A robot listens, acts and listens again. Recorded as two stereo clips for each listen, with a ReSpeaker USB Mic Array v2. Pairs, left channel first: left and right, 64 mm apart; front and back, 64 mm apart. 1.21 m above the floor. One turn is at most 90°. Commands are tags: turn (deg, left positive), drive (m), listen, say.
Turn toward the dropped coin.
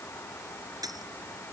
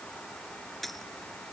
<turn deg="-90"/>
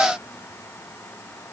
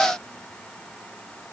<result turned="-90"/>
<say>Facing where the dropped coin came from. I can't hear it now.</say>